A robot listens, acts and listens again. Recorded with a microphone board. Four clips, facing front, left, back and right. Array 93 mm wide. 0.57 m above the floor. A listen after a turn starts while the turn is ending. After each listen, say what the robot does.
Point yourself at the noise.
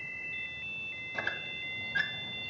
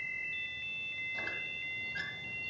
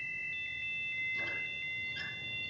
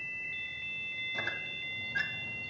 Turn 15° right.
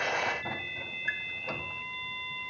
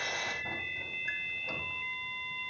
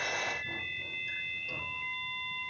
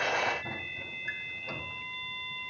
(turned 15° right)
Found it: a squeak, straight ahead, 1 to 2 m away.